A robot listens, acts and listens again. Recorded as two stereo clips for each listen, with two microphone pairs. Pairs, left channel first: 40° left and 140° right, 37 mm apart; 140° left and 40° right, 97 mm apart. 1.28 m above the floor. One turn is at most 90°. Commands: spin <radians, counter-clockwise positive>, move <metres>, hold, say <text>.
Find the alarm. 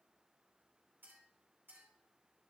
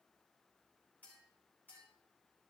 hold
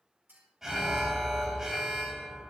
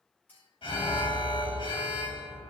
spin 1.57
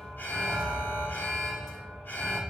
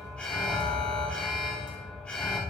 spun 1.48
spin 1.13
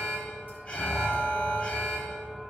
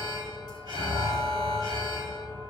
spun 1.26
spin -0.17
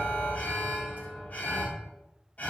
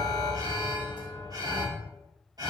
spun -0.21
say Facing the alarm.